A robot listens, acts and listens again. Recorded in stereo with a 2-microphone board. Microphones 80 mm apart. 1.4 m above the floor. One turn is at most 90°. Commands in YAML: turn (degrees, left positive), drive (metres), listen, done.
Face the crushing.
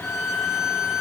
listen: true
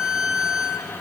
listen: true
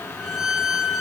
done: "I can't make out crushing, only a violin."